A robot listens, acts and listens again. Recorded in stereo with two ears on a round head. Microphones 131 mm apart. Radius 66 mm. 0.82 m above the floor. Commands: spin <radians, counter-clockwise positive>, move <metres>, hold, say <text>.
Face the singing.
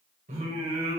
spin -0.79
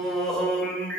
spin 0.17
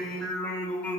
spin 0.17
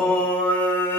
spin 0.26
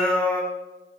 spin 0.17
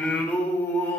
spin 0.26
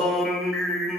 say Found it: singing, straight ahead, 2 to 4 m away.